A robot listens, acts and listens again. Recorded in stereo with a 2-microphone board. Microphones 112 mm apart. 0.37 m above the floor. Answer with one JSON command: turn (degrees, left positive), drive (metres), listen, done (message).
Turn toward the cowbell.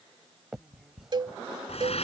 {"turn": -45}
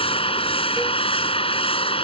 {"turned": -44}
{"listen": true}
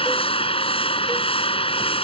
{"listen": true}
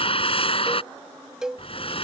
{"done": "Found it: a cowbell, straight ahead."}